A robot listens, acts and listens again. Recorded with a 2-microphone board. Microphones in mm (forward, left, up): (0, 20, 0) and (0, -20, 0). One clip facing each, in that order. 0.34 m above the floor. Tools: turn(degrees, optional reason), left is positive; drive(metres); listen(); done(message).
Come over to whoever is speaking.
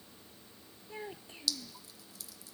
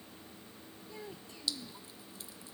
turn(degrees=30, reason="The child speaking: about 30° left or 150° left.")
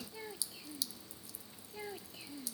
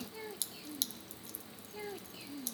drive(metres=1.0)
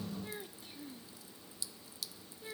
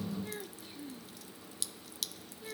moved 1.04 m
drive(metres=1.0)
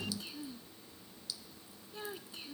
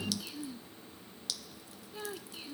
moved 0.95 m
drive(metres=1.0)
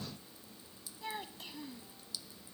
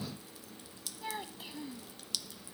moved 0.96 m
drive(metres=1.0)
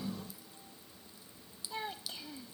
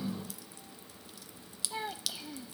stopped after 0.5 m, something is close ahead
turn(degrees=-10, reason="The child speaking is now 10° right.")
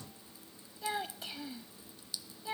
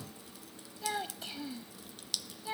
done("Arrived at the child speaking, straight ahead.")